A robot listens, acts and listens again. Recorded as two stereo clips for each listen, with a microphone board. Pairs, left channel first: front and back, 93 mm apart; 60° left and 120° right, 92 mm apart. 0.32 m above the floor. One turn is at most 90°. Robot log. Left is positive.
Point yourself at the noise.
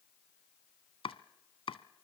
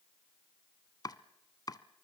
note: The chopping: 15° left.
cmd yaw +15
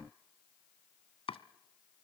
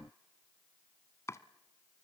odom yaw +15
end: Found it: chopping, straight ahead.